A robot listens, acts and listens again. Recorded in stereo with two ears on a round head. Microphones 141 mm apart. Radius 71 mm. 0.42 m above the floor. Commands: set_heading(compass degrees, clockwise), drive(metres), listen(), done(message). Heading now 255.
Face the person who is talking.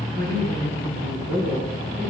set_heading(345)
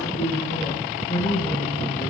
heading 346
set_heading(326)
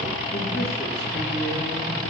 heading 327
done("Found it: a man speaking, straight ahead.")